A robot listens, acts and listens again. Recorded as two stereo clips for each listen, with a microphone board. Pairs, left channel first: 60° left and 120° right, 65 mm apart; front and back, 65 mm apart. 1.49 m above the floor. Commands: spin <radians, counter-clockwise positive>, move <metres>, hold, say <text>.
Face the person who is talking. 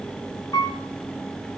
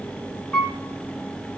hold
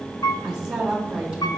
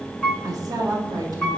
spin 2.79
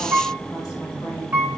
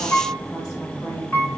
hold
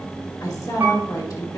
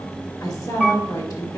spin 0.44
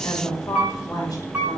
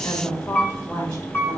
spin 0.52
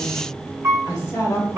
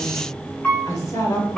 spin 0.26
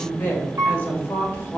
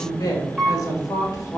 say Facing the woman speaking.